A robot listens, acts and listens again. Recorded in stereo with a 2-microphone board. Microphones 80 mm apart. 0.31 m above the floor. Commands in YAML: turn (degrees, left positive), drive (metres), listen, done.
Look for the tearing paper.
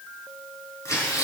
turn: 40
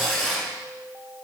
done: "Found it: tearing paper, straight ahead, over 4 m away."